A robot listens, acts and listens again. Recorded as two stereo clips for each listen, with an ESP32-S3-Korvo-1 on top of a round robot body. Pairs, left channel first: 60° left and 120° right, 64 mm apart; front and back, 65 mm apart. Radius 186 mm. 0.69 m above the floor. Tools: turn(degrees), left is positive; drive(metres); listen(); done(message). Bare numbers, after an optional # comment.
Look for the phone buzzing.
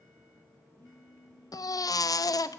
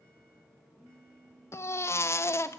# The phone buzzing: 110° left.
turn(110)
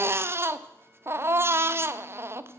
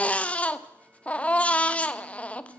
listen()
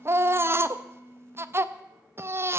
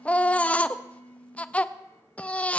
done("Found it: a phone buzzing, straight ahead, over 4 m away.")